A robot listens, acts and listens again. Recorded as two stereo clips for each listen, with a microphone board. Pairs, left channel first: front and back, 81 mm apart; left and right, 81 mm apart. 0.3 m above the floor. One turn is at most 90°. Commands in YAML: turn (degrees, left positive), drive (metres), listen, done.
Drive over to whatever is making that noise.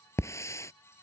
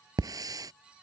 turn: -55
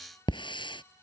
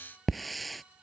drive: 1.0
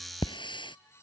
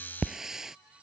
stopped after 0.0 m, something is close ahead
done: "Something is in my way. I am facing the hiss but have not reached it."